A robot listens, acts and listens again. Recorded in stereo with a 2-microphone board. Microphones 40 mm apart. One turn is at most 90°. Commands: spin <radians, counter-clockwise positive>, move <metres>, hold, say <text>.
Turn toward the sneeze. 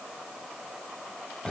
hold
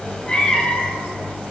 hold
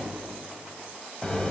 say I can't make out a sneeze, only a cat meowing.